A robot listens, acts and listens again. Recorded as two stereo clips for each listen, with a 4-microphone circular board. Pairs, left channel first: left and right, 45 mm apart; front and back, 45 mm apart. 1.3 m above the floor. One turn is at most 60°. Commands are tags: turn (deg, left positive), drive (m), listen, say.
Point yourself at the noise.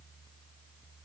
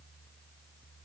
<listen/>
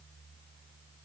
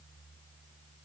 <listen/>
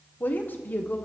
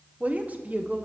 <turn deg="60"/>
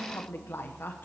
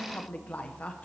<turn deg="55"/>
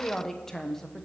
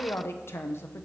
<turn deg="10"/>
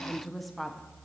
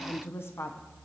<say>Facing the woman speaking.</say>